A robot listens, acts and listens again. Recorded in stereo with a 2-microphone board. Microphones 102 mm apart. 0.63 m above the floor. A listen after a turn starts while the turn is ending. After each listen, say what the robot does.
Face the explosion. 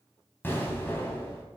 Turn 20° left.
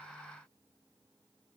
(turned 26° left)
Keep listening.
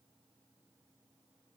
I heard an explosion, but can't make it out now. It was about 5° right or 135° left.